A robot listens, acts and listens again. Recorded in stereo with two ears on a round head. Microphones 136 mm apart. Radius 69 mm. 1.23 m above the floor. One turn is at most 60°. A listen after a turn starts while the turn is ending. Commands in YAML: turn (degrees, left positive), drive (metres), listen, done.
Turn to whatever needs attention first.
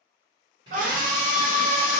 turn: -55
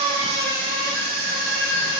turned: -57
turn: -60
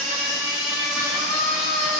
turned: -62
done: "Found it: a scream, straight ahead."